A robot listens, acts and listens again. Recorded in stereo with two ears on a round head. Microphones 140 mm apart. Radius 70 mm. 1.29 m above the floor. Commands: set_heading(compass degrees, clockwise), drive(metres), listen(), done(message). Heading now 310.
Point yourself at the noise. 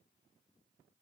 listen()
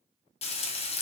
set_heading(270)
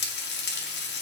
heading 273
set_heading(173)
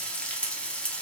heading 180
done("Facing the frying.")